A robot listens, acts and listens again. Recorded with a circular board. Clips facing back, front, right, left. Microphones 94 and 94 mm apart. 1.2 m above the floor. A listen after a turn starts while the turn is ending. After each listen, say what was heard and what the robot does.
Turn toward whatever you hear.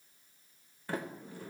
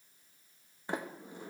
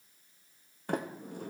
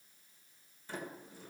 The sliding door: 70° right. Turn 70° right.
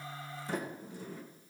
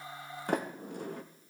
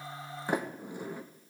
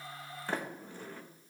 The sliding door is now 15° right. Turn 15° right.
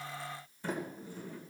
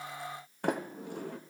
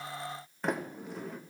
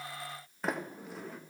Facing the sliding door.